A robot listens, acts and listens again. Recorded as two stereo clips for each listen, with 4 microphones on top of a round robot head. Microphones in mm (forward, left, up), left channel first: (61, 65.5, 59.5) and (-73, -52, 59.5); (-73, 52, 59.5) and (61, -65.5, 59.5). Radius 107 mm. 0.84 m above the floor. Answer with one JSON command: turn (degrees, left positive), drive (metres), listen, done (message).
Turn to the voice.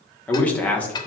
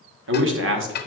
{"turn": -40}
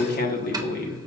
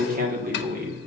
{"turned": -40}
{"done": "Facing the man speaking."}